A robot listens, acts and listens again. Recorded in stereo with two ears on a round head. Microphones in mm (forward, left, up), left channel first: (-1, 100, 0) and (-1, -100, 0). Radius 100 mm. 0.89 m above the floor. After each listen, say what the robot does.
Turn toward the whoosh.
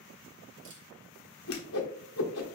Turn 65° left.
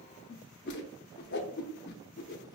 Turn 50° left.
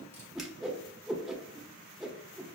Facing the whoosh.